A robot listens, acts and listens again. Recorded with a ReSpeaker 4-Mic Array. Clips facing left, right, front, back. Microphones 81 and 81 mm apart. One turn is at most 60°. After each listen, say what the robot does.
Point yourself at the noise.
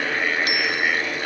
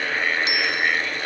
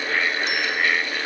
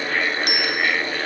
Turn 60° right.
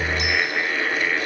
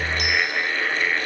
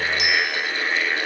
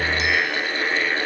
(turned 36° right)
Turn 60° right.
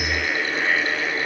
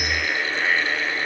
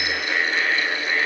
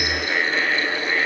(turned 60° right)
Turn 60° right.
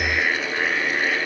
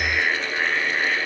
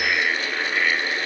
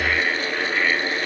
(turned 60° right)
Facing where the bicycle bell came from. I can't hear it now.